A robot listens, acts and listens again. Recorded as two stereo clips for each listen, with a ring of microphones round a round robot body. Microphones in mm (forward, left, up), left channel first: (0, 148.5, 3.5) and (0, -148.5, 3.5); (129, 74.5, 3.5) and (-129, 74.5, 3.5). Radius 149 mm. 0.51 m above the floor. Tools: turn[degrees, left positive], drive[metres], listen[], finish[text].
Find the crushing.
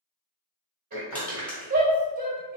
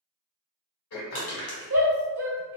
Action: finish[Found it: crushing, straight ahead, 2 to 4 m away.]